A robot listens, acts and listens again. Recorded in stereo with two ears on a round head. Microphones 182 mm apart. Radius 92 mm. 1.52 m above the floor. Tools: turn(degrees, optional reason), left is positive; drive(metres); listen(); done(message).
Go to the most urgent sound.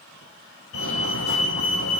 turn(degrees=90)
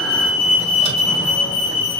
drive(metres=1.0)
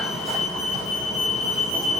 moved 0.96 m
drive(metres=1.0)
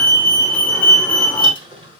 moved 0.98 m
drive(metres=1.0)
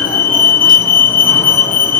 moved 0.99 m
turn(degrees=10, reason="The fire alarm is now 10° left.")
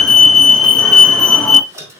drive(metres=1.0)
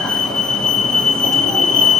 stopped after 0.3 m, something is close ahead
done("I am next to the fire alarm.")